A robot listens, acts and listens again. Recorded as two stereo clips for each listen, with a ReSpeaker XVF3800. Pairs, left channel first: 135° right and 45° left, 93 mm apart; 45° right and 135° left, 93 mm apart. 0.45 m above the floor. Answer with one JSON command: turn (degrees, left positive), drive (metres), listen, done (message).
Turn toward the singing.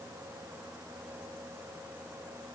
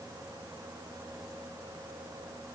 {"listen": true}
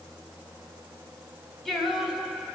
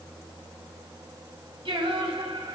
{"turn": 130}
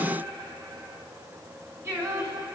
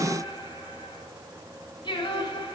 {"turn": -15}
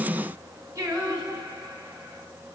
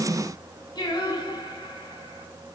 {"done": "Found it: singing, straight ahead."}